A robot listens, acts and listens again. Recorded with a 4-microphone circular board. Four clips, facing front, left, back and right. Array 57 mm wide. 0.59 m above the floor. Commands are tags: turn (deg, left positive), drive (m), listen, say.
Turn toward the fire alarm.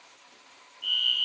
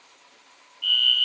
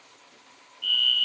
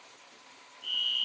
<turn deg="115"/>
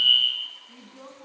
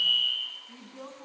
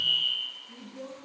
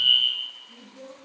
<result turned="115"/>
<turn deg="-35"/>
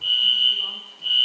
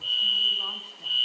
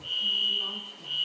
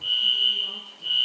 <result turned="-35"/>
<turn deg="-10"/>
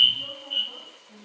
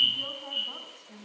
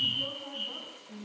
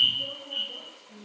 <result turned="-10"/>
<say>Found it: a fire alarm, straight ahead, 2 to 4 m away.</say>